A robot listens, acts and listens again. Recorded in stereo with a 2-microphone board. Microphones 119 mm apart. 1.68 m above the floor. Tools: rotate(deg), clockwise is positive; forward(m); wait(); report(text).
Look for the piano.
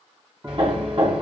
rotate(20)
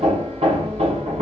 wait()
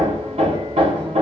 wait()
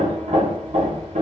report("I heard a piano, but can't make it out now. It was about straight ahead or 140° right.")